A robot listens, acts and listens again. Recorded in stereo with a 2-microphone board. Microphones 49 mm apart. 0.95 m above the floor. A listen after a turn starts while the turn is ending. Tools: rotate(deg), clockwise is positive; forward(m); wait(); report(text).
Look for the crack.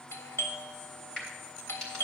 rotate(-30)
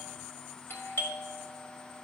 wait()
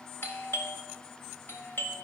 report("I heard a crack, but can't make it out now. It was about 20° right or 140° left.")